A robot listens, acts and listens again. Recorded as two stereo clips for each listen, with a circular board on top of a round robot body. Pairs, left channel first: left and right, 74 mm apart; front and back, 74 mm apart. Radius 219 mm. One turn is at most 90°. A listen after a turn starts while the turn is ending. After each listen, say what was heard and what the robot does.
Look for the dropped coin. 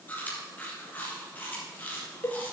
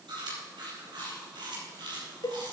Keep listening.
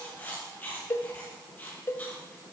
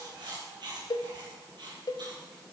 Keep listening.
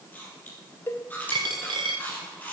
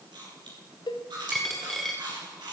The dropped coin: 90° right. Turn 90° right.
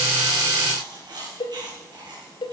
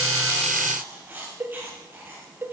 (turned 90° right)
Facing where the dropped coin came from. I can't hear it now.